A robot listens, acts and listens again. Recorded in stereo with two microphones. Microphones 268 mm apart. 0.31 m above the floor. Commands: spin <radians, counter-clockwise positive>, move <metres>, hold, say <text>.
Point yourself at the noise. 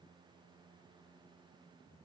hold
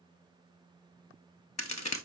spin 1.57
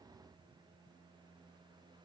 say I heard a crack from this way, but can't make it out now.